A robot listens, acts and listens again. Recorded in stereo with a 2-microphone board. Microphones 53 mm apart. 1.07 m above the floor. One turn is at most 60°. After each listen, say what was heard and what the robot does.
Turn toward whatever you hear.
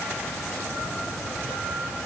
Keep listening.
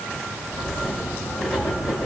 Turn 30° right.
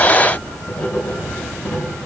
So it is at 15° left. Turn 15° left.
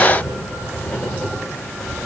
Found it: writing, straight ahead, over 4 m away.